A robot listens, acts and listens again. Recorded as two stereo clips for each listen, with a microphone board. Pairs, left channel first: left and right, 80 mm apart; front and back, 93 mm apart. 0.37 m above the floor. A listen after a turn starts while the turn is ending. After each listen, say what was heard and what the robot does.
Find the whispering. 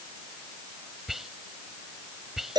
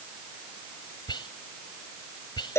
Facing the whispering.